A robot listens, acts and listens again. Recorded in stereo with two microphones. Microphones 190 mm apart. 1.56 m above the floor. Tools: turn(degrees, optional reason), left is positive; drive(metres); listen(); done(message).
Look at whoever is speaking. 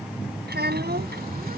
turn(degrees=-60, reason="The child speaking: about 60° right or 120° right.")
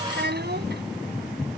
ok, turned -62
turn(degrees=-60, reason="So it is at 60° right.")
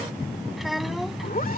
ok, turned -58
done("Found it: a child speaking, straight ahead.")